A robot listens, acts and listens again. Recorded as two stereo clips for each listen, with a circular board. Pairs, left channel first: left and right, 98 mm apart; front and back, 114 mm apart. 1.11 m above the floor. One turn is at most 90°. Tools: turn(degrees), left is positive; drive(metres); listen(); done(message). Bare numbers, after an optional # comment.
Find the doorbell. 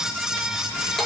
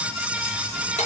listen()
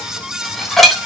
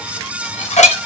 listen()
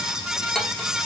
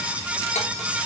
done("I can't make out a doorbell, only dishes clattering.")